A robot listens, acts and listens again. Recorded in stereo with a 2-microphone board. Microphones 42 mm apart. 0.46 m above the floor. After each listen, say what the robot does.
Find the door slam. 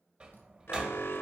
Turn 25° right.
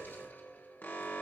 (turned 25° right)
Keep listening.
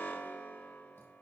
I heard a door slam, but can't make it out now. It was about straight ahead or 130° right.